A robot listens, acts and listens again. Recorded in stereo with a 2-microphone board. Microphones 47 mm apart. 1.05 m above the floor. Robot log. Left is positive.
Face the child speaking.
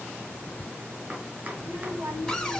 cmd yaw -90
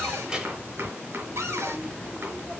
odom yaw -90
note: So it is at 30° right.
cmd yaw -30
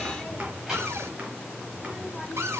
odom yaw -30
note: The child speaking is now 10° right.
cmd yaw -10
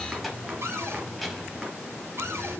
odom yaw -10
end: Facing the child speaking, over 4 m away.